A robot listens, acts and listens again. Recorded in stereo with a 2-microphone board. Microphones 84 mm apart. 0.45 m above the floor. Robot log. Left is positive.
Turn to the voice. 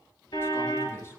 note: The man speaking: about 30° left or 150° left.
cmd yaw +30
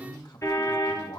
note: So it is at 120° left.
cmd yaw +120
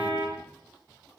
cmd idle
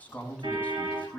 note: The man speaking is now 15° left.
cmd yaw +15
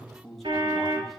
end: Facing the man speaking.